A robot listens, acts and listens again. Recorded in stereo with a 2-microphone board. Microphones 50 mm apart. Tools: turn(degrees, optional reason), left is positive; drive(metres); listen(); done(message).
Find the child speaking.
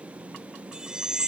listen()
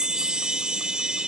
listen()
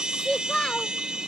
turn(degrees=20, reason="The child speaking: about 20° left or 160° left.")
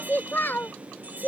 turn(degrees=130, reason="So it is at 130° left.")
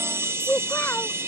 turn(degrees=45, reason="The child speaking is now 45° left.")
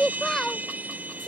turn(degrees=10, reason="The child speaking is now 10° left.")
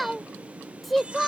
done("Found it: a child speaking, straight ahead.")